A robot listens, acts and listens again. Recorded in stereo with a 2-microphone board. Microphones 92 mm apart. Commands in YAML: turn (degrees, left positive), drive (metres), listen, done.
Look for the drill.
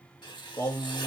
listen: true
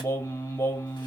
listen: true
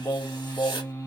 done: "I can't make out a drill, only writing and singing."